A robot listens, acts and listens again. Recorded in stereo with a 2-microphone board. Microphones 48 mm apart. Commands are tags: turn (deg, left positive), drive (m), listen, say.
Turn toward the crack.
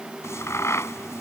<turn deg="90"/>
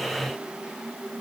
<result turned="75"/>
<turn deg="15"/>
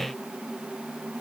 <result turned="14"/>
<say>I heard a crack from this way, but can't make it out now.</say>